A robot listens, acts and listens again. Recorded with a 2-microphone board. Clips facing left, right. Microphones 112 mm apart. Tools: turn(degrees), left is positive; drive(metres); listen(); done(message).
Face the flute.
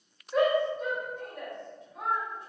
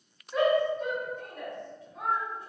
listen()
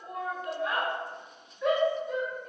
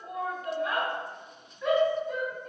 listen()
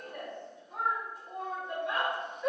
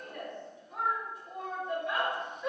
done("I can't make out a flute to turn to.")